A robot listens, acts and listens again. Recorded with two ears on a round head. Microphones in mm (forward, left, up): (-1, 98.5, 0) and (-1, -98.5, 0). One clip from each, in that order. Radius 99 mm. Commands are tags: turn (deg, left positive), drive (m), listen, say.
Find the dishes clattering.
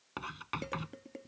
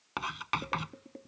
<turn deg="90"/>
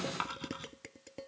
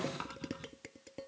<turn deg="10"/>
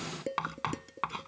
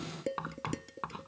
<say>Found it: dishes clattering, straight ahead.</say>